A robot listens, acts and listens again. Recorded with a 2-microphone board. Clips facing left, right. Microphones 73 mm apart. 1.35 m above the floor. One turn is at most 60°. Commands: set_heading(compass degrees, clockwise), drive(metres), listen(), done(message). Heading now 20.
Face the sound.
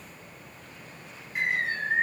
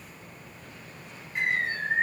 set_heading(350)
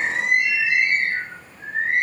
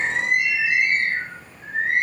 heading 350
set_heading(290)
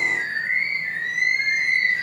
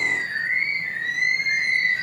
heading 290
set_heading(230)
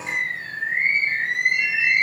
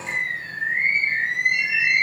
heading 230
set_heading(185)
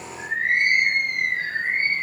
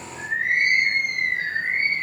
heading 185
set_heading(195)
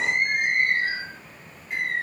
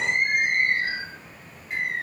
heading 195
done("Facing the bird.")